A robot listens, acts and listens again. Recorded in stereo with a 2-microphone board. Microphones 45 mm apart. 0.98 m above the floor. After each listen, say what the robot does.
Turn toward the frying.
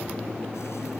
Keep listening.
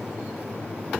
Keep listening.
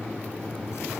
I can't make out frying.